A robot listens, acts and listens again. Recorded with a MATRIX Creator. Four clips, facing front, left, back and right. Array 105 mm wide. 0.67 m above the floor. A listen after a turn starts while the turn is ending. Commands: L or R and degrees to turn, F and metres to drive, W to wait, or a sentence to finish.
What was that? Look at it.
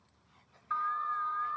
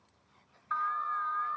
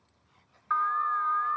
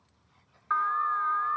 R125
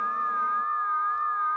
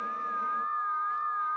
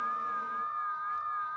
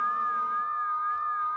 Facing the alarm, 1 to 2 m away.